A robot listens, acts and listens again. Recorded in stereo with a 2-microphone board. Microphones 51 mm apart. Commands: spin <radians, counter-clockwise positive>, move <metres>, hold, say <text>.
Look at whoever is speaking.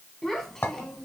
spin 0.52
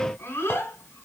spin 2.18
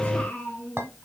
spin 0.44
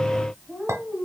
spin -0.17
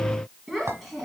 say Facing the child speaking, 2 to 4 m away.